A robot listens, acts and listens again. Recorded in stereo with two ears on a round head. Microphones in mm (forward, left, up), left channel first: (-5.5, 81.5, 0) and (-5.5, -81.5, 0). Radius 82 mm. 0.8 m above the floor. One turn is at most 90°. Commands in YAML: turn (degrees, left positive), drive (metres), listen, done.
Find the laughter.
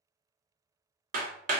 listen: true
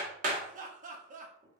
turn: -45
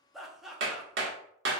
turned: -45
done: "Found it: laughter, straight ahead, under 1 m away."